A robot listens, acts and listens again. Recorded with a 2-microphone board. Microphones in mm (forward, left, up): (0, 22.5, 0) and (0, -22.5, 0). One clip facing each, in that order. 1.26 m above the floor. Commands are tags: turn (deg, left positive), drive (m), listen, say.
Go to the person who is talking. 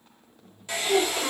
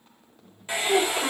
<turn deg="-25"/>
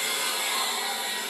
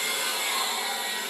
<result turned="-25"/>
<listen/>
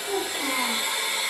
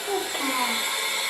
<turn deg="-130"/>
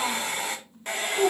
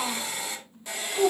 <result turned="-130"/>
<drive m="1.0"/>
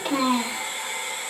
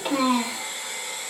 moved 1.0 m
<drive m="1.0"/>
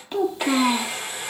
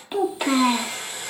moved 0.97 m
<turn deg="-10"/>
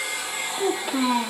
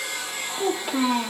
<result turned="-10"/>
<drive m="1.0"/>
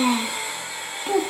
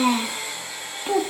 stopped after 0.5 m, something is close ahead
<say>I am next to the child speaking.</say>